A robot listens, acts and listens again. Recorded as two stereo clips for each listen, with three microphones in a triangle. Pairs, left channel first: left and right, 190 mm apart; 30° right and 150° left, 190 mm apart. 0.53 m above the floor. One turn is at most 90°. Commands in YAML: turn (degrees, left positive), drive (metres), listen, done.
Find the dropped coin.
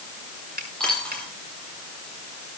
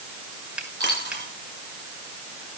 turn: 90
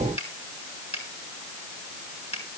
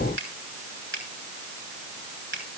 turn: 85
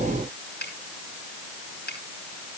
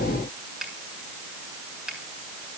done: "I heard a dropped coin from this way, but can't make it out now."